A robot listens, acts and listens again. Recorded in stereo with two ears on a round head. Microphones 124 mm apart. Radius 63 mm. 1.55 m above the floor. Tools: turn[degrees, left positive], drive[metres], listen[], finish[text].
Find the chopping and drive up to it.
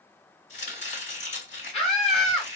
Thought: The chopping: about 55° left or 125° left.
Action: turn[55]
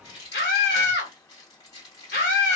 Thought: So it is at 40° left.
Action: turn[40]
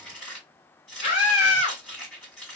Thought: The chopping is now 10° left.
Action: turn[10]
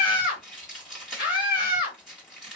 Action: drive[1.0]
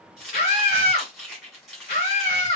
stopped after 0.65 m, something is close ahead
Action: finish[I am next to the chopping.]